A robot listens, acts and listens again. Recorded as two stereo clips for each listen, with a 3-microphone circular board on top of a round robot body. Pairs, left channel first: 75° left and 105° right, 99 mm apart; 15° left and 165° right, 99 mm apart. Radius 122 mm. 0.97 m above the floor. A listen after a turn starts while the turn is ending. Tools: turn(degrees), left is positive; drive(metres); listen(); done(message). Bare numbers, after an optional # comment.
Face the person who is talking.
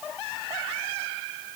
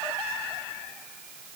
listen()
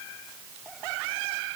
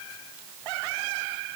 listen()
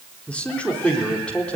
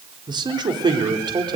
# The man speaking: 155° left.
turn(155)
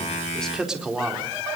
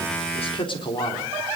# The man speaking is now 20° right.
turn(-20)
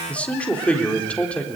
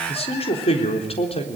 done("Facing the man speaking.")